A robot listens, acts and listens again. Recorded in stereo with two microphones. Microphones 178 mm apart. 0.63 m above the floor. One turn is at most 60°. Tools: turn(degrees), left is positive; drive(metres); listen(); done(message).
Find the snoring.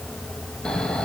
turn(degrees=30)
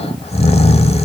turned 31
turn(degrees=60)
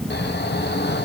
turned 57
turn(degrees=60)
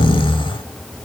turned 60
turn(degrees=30)
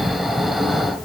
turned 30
done("Found it: snoring, straight ahead.")